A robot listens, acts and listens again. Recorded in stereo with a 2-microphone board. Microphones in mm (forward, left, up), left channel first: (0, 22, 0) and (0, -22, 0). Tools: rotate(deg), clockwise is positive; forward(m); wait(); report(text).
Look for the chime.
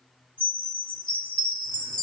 rotate(-35)
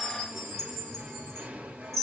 report("Found it: a chime, straight ahead.")